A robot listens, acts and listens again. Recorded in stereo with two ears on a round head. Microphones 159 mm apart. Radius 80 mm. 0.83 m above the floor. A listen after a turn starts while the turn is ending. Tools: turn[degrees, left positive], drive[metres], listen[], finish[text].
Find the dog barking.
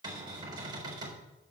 Action: listen[]
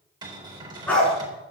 Action: turn[30]
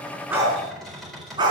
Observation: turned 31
Thought: So it is at 25° right.
Action: turn[-25]
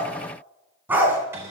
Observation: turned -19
Thought: The dog barking is now 10° right.
Action: turn[-10]
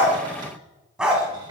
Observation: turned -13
Action: finish[Facing the dog barking.]